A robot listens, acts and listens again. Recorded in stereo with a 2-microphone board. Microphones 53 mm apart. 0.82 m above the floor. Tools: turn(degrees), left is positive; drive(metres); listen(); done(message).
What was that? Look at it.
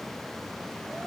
listen()
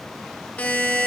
turn(degrees=25)
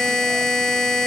done("Facing the buzzer.")